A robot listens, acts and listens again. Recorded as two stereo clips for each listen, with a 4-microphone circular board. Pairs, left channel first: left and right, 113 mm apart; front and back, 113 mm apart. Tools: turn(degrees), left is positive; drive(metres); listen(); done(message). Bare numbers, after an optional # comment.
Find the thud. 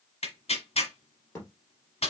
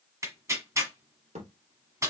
# The thud: 155° left.
turn(155)
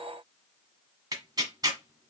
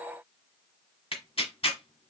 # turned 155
done("Facing where the thud came from. I can't hear it now.")